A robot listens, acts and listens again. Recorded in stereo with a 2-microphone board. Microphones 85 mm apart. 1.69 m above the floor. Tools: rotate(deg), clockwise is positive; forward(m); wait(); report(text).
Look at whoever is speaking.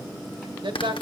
rotate(70)
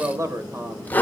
rotate(40)
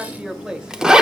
rotate(10)
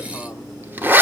wait()
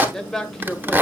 report("Found it: a man speaking, straight ahead, 1 to 2 m away.")